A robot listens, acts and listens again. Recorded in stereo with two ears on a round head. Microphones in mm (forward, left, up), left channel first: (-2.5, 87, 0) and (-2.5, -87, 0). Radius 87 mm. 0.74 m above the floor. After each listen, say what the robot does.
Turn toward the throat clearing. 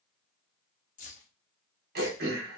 Turn 55° right.
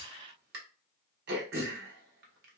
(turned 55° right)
Turn 65° right.
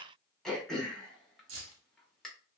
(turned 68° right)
Facing the throat clearing, under 1 m away.